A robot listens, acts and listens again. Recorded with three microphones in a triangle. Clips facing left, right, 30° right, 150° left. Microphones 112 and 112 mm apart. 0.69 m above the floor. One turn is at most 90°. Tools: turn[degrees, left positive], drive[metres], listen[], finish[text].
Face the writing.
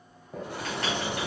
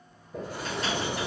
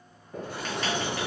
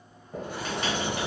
Thought: The writing: 80° left.
Action: turn[80]
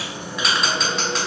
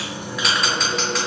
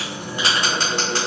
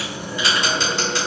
Action: finish[Found it: writing, straight ahead, 1 to 2 m away.]